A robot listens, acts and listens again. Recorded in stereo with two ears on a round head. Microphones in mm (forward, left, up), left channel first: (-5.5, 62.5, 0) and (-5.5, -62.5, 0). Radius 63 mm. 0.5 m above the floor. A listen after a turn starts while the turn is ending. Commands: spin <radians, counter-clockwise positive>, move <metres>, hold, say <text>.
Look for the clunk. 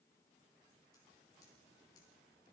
hold
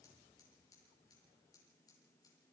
hold
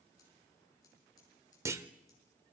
spin -0.35
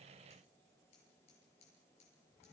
hold
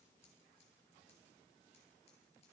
say I heard a clunk, but can't make it out now. It was about straight ahead or 140° right.